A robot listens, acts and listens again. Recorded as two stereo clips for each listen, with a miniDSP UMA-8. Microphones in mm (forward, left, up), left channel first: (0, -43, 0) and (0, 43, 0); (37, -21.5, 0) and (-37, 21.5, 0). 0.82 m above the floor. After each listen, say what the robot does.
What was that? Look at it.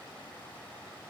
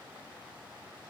Keep listening.
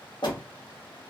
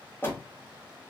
Turn 90° right.
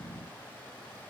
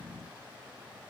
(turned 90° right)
Facing where the door slam came from. I can't hear it now.